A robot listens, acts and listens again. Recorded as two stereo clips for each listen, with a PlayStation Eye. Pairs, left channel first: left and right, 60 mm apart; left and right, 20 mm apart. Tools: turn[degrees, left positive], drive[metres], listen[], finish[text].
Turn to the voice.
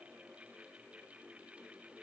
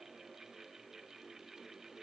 Action: listen[]
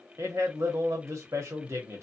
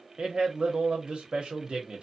Thought: The man speaking: about 55° right or 125° right.
Action: turn[-55]
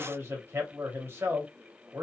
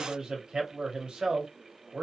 Thought: So it is at 50° right.
Action: turn[-50]
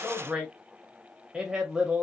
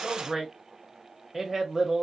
Thought: The man speaking is now 15° right.
Action: turn[-15]
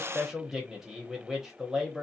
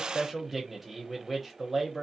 Action: finish[Found it: a man speaking, straight ahead.]